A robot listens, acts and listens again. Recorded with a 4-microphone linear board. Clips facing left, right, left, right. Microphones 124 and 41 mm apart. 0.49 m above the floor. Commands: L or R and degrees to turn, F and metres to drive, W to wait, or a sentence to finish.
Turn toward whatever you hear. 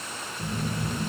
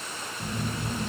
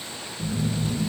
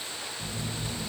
L30
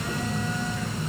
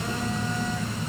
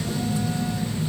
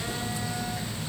R30
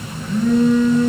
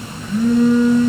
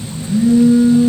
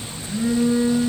Found it: a phone buzzing, straight ahead, over 4 m away.